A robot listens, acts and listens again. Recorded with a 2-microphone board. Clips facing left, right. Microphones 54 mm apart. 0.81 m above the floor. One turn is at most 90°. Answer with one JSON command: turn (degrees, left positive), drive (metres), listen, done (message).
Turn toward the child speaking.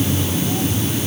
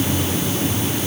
{"listen": true}
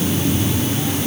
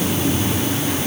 {"listen": true}
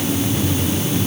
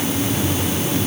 {"done": "I can't make out a child speaking to turn to."}